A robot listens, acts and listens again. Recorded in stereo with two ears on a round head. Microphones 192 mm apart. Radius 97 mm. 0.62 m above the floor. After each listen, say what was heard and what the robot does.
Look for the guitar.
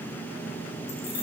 Keep listening.
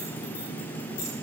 Keep listening.
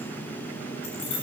I can't make out a guitar to turn to.